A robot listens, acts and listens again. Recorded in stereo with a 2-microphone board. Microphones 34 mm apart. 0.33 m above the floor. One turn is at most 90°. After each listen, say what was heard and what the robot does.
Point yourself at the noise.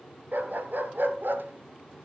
Turn 90° right.
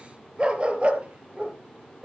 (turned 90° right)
So it is at 45° right. Turn 45° right.
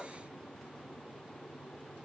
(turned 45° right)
Keep listening.
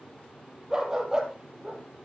The dog barking is now 20° right. Turn 20° right.
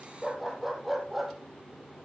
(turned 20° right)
Found it: a dog barking, straight ahead.